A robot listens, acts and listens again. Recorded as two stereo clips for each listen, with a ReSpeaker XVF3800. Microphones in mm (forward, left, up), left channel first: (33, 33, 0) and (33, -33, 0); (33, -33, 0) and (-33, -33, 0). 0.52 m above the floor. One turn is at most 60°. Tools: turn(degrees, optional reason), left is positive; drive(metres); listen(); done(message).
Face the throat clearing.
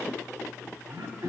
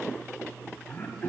turn(degrees=-60, reason="The throat clearing: 65° right.")
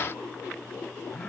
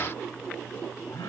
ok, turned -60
done("Facing the throat clearing.")